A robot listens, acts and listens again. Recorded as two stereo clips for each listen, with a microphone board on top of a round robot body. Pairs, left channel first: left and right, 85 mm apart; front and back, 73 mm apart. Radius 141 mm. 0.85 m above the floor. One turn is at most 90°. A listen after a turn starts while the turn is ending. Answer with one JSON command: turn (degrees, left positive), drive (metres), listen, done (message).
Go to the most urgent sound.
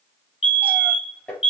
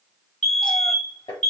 {"turn": 85}
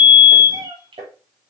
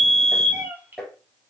{"turn": -15}
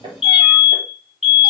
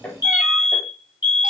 {"drive": 1.0}
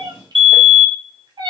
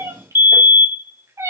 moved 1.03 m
{"drive": 1.0}
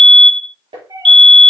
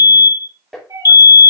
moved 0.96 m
{"drive": 1.0}
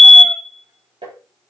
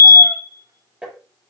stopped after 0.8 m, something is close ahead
{"done": "I am next to the fire alarm."}